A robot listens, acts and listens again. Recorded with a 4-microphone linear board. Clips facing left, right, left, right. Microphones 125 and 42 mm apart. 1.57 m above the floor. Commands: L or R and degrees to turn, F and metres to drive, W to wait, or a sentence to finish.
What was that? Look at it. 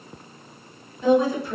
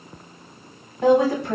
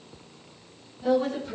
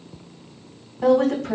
R90
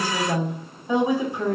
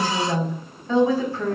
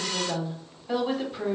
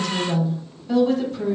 L20
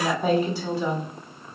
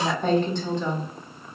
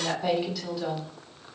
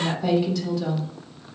L10
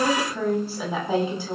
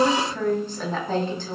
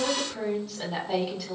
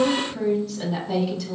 L10
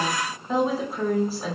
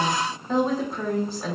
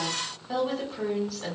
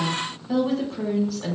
Found it: a woman speaking, straight ahead, over 4 m away.